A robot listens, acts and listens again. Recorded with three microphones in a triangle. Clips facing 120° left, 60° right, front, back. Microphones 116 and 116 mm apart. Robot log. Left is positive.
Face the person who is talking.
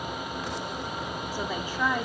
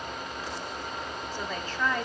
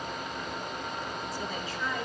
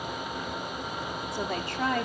note: The woman speaking: 165° right.
cmd yaw -165
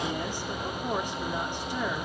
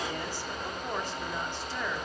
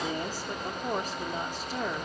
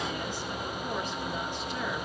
note: The woman speaking is now 50° left.
cmd yaw +50
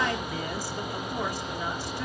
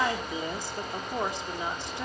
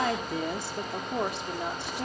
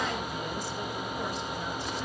end: Facing the woman speaking.